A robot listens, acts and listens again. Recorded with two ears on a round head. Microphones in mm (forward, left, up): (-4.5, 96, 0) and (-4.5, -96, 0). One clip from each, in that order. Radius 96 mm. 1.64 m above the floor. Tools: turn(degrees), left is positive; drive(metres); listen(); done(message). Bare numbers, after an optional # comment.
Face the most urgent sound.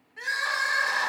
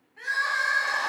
# The crying: about 35° left or 145° left.
turn(35)
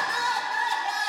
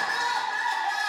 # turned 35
done("Facing the crying.")